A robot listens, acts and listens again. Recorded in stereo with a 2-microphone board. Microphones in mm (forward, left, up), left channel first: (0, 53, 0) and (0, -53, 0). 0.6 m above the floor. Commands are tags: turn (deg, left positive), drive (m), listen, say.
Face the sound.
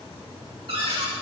<turn deg="-60"/>
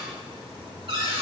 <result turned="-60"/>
<turn deg="-55"/>
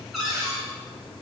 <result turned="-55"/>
<say>Found it: a cupboard door, straight ahead.</say>